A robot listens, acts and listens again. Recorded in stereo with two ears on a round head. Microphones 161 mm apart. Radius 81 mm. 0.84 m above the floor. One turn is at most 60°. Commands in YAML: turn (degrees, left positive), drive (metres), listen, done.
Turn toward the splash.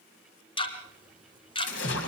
turn: 60
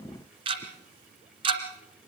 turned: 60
turn: 30
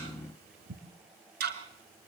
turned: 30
done: "I heard a splash from this way, but can't make it out now."